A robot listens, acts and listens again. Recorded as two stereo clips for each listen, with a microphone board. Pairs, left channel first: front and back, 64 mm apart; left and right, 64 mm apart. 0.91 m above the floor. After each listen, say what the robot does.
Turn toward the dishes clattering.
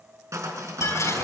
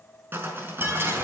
Turn 35° right.
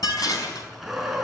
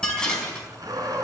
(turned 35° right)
Turn 15° left.
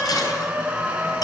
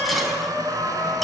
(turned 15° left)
Found it: dishes clattering, straight ahead.